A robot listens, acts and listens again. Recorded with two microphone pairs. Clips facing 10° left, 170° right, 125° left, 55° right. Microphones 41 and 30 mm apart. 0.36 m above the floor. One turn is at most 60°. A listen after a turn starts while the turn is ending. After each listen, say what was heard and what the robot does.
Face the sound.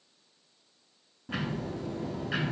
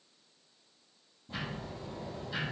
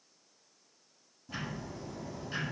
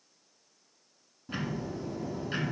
The ticking: 10° left. Turn 10° left.
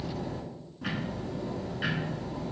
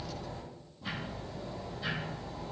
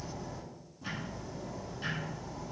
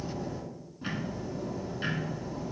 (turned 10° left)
Found it: ticking, straight ahead.